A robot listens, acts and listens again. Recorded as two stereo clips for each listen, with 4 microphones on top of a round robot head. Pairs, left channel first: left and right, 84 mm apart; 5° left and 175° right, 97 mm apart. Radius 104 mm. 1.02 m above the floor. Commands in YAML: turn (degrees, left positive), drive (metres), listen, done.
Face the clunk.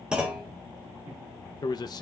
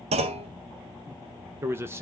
turn: -175
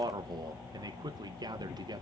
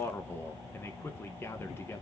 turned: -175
done: "Facing where the clunk came from. I can't hear it now."